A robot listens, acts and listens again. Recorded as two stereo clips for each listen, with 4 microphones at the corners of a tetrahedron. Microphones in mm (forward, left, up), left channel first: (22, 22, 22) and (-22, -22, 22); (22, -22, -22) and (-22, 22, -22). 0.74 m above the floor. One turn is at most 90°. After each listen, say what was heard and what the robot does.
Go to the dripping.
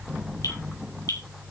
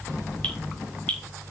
The dripping: 30° left. Turn 30° left.
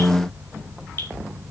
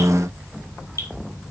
Drive 1.0 m forward.
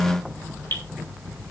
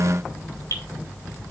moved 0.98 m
The dripping is now 10° right. Turn 10° right.
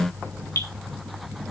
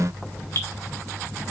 Drive 1.0 m forward.
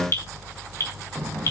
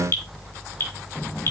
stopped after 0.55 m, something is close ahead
Something is in my way. I am facing the dripping but have not reached it.